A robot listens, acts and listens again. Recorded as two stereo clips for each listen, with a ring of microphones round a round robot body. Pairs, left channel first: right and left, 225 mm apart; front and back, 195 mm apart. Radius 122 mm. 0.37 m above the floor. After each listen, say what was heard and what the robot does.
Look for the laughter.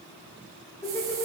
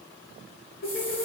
The laughter: 25° right. Turn 25° right.
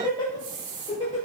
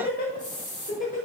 The laughter is now 40° right. Turn 40° right.
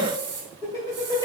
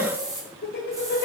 The laughter is now 20° right. Turn 20° right.
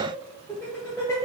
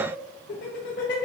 The laughter is now 15° right. Turn 15° right.
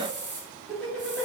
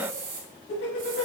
Facing the laughter.